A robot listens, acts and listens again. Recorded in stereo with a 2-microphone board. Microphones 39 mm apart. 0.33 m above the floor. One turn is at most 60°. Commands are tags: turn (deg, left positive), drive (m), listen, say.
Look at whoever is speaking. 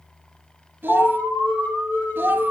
<turn deg="-60"/>
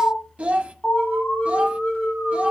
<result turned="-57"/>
<turn deg="-35"/>
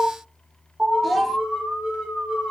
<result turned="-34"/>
<say>Found it: a child speaking, straight ahead, under 1 m away.</say>